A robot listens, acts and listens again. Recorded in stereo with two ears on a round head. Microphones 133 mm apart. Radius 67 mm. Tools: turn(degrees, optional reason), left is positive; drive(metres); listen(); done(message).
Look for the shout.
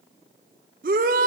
turn(degrees=-60, reason="The shout: about 60° right or 120° right.")
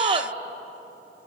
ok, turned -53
turn(degrees=-40, reason="So it is at 40° right.")
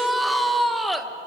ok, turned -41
done("Facing the shout, 1 to 2 m away.")